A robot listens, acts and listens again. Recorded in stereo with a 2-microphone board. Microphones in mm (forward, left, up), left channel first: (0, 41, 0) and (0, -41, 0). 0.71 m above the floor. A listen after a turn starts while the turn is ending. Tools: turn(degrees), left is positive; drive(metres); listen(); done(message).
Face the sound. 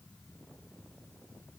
listen()
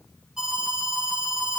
turn(degrees=-30)
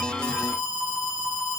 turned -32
turn(degrees=-140)
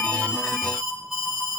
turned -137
done("Facing the alarm, over 4 m away.")